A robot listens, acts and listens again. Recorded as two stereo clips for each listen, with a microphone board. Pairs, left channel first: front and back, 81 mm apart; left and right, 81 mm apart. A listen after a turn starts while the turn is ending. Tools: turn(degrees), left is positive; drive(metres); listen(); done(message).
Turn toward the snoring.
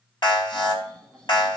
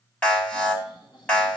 turn(degrees=85)
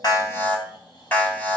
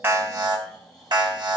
done("Facing the snoring.")